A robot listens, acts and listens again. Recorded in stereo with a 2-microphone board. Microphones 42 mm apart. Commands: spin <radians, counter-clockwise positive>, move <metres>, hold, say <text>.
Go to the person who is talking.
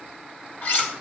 hold
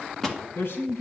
spin 1.22
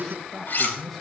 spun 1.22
move 1.0
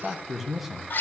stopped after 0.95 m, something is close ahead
say I am next to the man speaking.